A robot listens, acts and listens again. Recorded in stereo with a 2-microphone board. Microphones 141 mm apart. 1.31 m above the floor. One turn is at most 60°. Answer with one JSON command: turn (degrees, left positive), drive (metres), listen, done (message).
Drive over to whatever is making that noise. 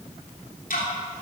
{"turn": 60}
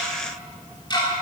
{"turn": 30}
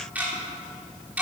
{"turn": -10}
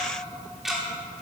{"drive": 1.0}
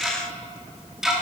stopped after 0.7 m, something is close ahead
{"done": "Blocked. The ticking is further on, straight ahead."}